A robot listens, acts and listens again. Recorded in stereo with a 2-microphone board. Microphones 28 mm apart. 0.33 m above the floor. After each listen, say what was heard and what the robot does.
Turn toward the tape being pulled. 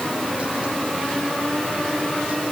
Keep listening.
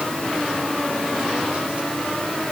Keep listening.
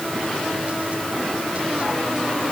I can't make out tape being pulled to turn to.